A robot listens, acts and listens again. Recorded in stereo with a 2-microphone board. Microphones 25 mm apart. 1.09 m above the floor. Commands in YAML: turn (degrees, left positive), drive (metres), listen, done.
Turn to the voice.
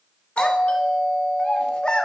turn: 40
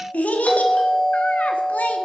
turn: 95
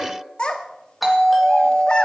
turn: 35
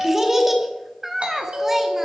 turn: -15
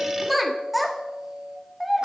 done: "Facing the child speaking, 1 to 2 m away."